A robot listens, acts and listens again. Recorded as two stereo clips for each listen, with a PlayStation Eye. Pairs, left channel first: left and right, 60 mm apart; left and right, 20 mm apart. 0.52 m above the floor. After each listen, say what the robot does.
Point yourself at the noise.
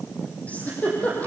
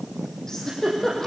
Turn 25° left.
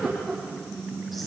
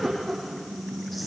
Found it: a giggle, straight ahead, over 4 m away.